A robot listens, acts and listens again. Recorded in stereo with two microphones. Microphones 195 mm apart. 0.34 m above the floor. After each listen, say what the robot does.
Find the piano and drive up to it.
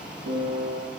Turn 70° right.
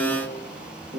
Turn 40° right.
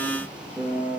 Drive 1.0 m forward.
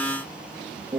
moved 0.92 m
Turn 20° right.
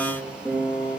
Drive 1.0 m forward.
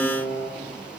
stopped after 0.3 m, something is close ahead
Arrived at the piano, straight ahead.